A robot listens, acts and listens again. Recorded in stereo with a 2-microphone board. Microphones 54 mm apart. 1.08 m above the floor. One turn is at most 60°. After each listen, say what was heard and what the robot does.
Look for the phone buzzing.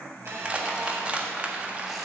The phone buzzing: about 60° right or 120° right. Turn 60° right.
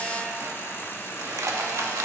So it is at 55° right. Turn 55° right.
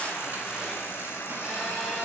Found it: a phone buzzing, straight ahead, 2 to 4 m away.